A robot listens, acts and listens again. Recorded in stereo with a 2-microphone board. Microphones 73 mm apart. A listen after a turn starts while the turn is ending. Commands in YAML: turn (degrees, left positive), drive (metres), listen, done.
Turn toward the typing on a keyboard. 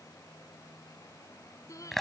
listen: true
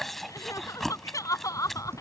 turn: -35
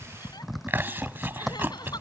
done: "Found it: typing on a keyboard, straight ahead."